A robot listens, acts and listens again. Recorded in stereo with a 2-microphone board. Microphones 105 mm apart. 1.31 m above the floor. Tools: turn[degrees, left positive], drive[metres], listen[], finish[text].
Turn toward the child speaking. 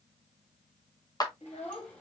Action: turn[90]
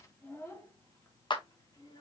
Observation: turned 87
Thought: So it is at 40° left.
Action: turn[40]
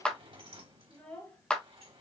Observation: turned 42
Thought: The child speaking is now 15° left.
Action: turn[15]
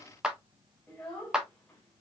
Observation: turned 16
Thought: The child speaking is now 10° left.
Action: turn[10]
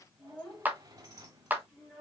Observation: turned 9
Action: finish[Found it: a child speaking, straight ahead.]